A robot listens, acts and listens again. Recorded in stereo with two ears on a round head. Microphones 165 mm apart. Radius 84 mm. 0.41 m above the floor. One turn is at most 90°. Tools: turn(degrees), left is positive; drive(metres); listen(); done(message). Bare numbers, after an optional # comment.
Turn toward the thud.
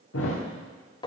turn(90)
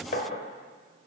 done("I heard a thud from this way, but can't make it out now.")